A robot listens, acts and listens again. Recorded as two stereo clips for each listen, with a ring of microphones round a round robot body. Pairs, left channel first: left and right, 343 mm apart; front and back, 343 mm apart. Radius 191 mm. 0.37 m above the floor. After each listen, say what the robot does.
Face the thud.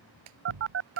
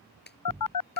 Turn 95° right.
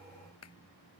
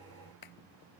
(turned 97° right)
Facing where the thud came from. I can't hear it now.